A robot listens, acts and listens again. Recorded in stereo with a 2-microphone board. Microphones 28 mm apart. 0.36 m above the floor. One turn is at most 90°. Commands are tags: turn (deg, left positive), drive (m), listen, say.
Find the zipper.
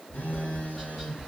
<listen/>
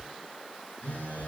<listen/>
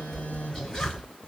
<turn deg="45"/>
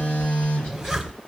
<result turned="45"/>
<say>Found it: a zipper, straight ahead.</say>